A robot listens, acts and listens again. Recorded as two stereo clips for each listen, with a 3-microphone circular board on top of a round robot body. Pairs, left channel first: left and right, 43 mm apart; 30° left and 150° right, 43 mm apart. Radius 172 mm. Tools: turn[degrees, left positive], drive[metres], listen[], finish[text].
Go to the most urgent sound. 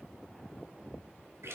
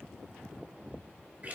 Action: listen[]
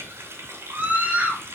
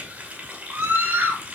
Thought: The scream: 130° right.
Action: turn[-130]
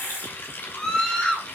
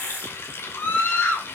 Thought: The scream is now 20° left.
Action: turn[20]
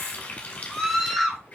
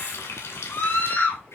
Action: drive[1.0]
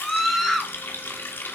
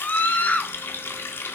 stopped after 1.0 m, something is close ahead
Action: finish[I am next to the scream.]